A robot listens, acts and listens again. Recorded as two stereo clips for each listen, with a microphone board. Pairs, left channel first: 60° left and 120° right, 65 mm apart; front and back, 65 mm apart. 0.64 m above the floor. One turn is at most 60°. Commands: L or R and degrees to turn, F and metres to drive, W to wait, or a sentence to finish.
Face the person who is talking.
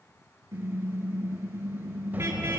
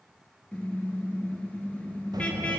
L60
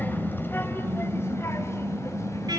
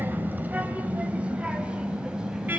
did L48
L60
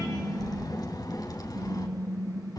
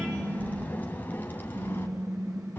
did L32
L60
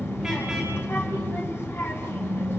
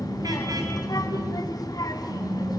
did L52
Facing the child speaking, 2 to 4 m away.